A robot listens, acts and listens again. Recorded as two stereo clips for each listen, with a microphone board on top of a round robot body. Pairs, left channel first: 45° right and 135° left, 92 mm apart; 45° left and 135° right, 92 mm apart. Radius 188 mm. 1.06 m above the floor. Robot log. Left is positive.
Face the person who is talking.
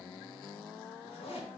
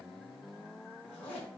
cmd idle
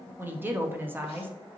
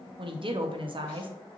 note: The woman speaking: 155° right.
cmd yaw -155
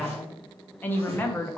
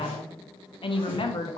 note: The woman speaking is now 25° left.
cmd yaw +25
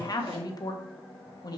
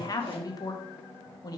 end: Found it: a woman speaking, straight ahead, 1 to 2 m away.